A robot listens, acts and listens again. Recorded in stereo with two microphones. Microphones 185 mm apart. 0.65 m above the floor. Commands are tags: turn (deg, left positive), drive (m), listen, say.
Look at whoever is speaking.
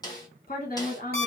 <turn deg="50"/>
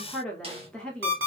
<say>Facing the woman speaking.</say>